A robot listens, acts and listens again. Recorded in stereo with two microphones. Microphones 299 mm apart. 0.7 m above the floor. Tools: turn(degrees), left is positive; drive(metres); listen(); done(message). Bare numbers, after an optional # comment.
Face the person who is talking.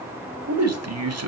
# The man speaking: about 55° right or 125° right.
turn(-55)
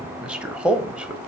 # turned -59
done("Found it: a man speaking, straight ahead, 1 to 2 m away.")